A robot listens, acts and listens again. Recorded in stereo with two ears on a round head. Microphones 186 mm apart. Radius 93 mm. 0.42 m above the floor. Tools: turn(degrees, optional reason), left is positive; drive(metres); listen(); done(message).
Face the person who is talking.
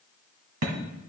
listen()
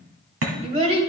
turn(degrees=-30, reason="The child speaking: about 30° right or 150° right.")
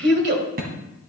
turn(degrees=-115, reason="So it is at 115° right.")
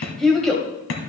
done("Facing the child speaking, 1 to 2 m away.")